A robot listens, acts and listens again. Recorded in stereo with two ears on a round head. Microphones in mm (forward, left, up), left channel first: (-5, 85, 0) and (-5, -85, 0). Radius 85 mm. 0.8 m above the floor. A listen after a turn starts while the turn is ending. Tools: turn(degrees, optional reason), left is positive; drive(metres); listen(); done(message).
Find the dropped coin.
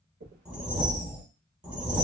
turn(degrees=-55, reason="The dropped coin: about 55° right or 125° right.")
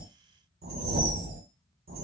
listen()
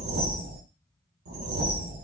done("I heard a dropped coin, but can't make it out now. It was about straight ahead or 70° right.")